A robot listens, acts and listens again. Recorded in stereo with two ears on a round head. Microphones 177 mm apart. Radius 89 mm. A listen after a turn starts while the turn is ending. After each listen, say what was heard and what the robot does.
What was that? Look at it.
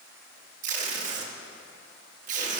The tape being pulled: about 40° right or 140° right. Turn 40° right.
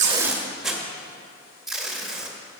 Facing the tape being pulled, under 1 m away.